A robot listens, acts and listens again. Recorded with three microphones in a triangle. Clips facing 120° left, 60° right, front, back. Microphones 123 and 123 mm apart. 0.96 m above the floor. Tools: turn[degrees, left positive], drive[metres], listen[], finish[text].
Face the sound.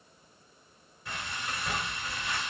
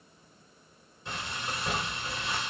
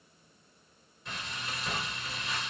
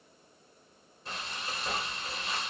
Thought: The frying: 120° right.
Action: turn[-120]
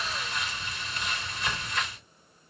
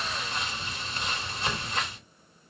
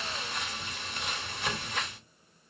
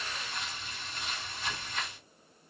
Action: finish[Facing the frying, 2 to 4 m away.]